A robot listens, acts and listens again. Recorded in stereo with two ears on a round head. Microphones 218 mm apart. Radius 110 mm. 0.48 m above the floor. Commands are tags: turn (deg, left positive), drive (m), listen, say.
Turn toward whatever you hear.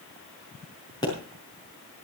<turn deg="15"/>
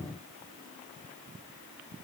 <listen/>
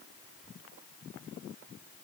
<say>I heard a pop, but can't make it out now. It was about straight ahead or 150° left.</say>